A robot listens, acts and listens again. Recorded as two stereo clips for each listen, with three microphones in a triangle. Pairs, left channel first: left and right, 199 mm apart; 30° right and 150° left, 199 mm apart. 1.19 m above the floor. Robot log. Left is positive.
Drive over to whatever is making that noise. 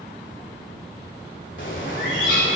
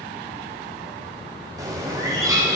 note: The bird: 80° left.
cmd yaw +80
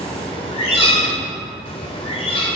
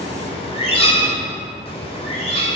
note: The bird is now 30° left.
cmd yaw +30
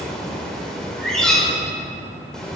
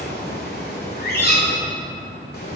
cmd fwd 1.0
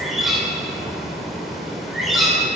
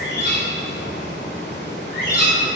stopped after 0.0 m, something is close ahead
end: Blocked. The bird is further on, straight ahead.